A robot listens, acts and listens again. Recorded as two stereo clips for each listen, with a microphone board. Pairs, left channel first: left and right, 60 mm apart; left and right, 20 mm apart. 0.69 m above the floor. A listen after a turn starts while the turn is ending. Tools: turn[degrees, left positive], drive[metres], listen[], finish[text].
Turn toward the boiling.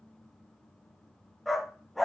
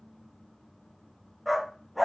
Action: listen[]
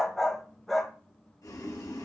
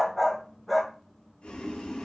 Thought: The boiling: about 75° left or 105° left.
Action: turn[75]
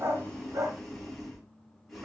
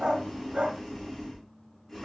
Action: finish[Facing the boiling.]